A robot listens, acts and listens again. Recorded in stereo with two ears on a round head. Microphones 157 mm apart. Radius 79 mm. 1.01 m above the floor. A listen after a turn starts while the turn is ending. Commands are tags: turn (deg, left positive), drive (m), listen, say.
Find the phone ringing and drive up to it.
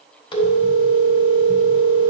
<turn deg="30"/>
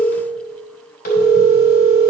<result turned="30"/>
<turn deg="120"/>
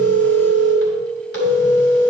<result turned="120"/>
<turn deg="65"/>
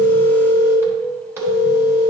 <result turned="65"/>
<turn deg="-15"/>
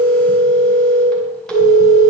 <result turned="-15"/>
<drive m="1.0"/>
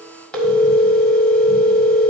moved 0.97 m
<drive m="1.0"/>
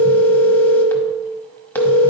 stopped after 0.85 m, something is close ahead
<turn deg="10"/>
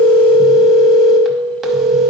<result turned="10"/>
<say>Arrived at the phone ringing, straight ahead.</say>